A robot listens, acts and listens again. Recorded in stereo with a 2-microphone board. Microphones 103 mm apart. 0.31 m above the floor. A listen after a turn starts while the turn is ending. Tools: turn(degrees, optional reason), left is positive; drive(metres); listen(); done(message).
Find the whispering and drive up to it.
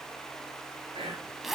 turn(degrees=-65, reason="The whispering: about 65° right or 115° right.")
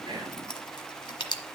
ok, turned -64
listen()
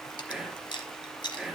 drive(metres=1.0)
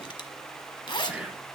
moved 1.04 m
turn(degrees=-10, reason="The whispering is now 10° right.")
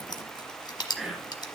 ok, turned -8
drive(metres=1.0)
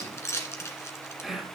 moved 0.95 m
drive(metres=1.0)
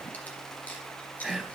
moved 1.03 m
drive(metres=1.0)
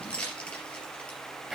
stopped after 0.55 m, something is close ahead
done("I am next to the whispering.")